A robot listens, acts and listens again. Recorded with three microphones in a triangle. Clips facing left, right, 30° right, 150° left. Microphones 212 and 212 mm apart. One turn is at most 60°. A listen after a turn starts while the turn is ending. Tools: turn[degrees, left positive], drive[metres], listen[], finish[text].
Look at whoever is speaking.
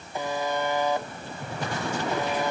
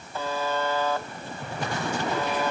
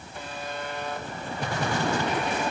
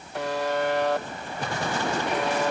Action: listen[]
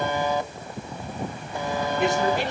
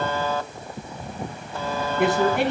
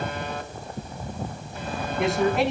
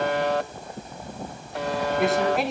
Thought: The man speaking: 120° right.
Action: turn[-60]
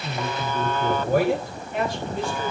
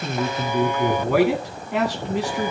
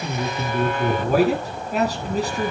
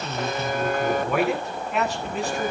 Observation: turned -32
Thought: The man speaking is now 85° right.
Action: turn[-60]
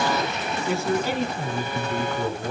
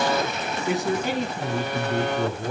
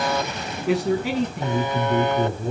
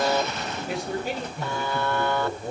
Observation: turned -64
Thought: The man speaking is now 20° right.
Action: turn[-20]
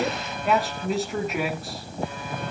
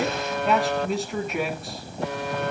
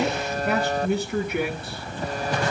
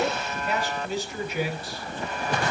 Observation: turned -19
Action: finish[Found it: a man speaking, straight ahead.]